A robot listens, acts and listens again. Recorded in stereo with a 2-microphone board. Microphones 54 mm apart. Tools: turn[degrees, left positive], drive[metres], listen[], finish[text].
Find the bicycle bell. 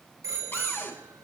Thought: The bicycle bell: about 70° right or 110° right.
Action: turn[-70]
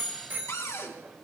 Thought: So it is at 40° right.
Action: turn[-40]
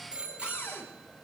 Thought: The bicycle bell is now 20° right.
Action: turn[-20]
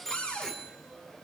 Action: finish[Facing the bicycle bell, over 4 m away.]